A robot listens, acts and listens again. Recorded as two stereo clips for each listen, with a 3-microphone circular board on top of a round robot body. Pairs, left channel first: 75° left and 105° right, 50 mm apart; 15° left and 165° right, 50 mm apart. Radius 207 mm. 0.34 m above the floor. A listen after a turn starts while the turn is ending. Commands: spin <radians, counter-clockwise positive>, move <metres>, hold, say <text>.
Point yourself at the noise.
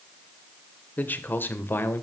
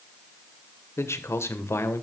spin 0.61
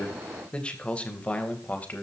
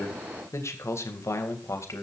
spin 0.26
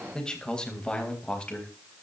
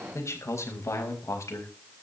say Found it: a man speaking, straight ahead.